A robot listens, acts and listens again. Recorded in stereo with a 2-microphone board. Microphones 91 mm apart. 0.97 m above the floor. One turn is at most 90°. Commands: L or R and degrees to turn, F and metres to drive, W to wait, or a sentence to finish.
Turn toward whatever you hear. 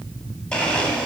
L30
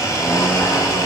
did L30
L90
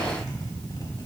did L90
L45
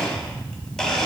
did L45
Facing the blender, 1 to 2 m away.